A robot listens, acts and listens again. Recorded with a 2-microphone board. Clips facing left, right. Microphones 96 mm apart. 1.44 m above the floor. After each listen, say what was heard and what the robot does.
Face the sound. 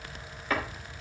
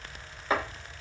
The chopping: about 25° right or 155° right. Turn 25° right.
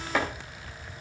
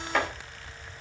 Found it: chopping, straight ahead, 2 to 4 m away.